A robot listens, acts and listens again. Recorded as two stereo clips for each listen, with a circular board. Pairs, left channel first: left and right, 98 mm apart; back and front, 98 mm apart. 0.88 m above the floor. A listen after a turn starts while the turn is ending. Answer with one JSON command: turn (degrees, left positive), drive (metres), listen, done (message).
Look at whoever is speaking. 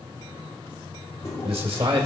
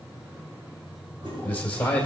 {"turn": -110}
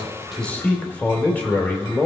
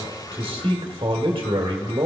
{"turn": 15}
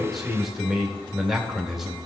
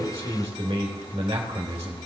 {"done": "Facing the man speaking."}